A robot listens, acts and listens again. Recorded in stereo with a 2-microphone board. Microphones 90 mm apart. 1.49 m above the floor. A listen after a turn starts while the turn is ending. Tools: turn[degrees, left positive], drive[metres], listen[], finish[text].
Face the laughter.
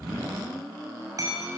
Action: listen[]
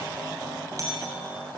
Action: listen[]
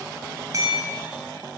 Action: finish[I can't make out laughter to turn to.]